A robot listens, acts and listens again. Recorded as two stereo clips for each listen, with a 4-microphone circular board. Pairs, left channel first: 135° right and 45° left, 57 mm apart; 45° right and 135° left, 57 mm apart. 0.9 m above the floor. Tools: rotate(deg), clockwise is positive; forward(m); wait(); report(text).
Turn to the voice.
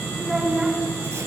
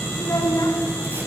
rotate(25)
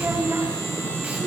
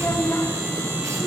report("Found it: a child speaking, straight ahead, over 4 m away.")